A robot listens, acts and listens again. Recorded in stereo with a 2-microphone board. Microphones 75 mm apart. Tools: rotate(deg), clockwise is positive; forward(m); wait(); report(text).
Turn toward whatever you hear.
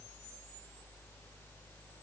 wait()
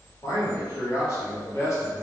rotate(-35)
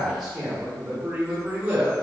rotate(15)
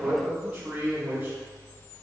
rotate(20)
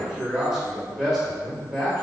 report("Found it: a man speaking, straight ahead.")